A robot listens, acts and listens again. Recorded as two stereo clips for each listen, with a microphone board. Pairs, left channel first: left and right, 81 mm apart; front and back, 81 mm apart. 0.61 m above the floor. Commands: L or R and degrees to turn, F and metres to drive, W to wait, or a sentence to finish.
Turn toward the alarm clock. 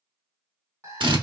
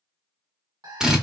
R145
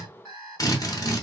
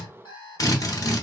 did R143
Found it: an alarm clock, straight ahead, 1 to 2 m away.